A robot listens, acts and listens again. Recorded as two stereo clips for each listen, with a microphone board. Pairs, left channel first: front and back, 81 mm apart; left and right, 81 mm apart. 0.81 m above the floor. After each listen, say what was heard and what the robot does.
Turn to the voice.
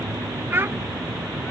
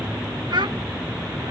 The child speaking: 120° right. Turn 120° right.
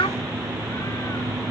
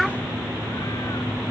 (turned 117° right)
Found it: a child speaking, straight ahead.